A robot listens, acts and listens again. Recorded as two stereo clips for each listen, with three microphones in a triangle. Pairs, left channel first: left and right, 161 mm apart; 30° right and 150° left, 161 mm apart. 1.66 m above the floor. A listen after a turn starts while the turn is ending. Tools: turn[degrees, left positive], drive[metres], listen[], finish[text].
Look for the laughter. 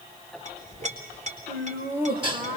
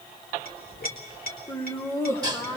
Thought: The laughter: 100° right.
Action: turn[-100]
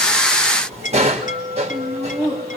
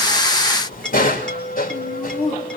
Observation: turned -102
Thought: The laughter is now 20° left.
Action: turn[20]
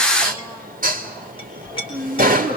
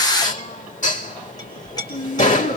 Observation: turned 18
Thought: The laughter is now 10° left.
Action: turn[10]
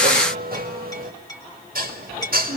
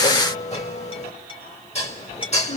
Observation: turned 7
Action: finish[Found it: laughter, straight ahead, 2 to 4 m away.]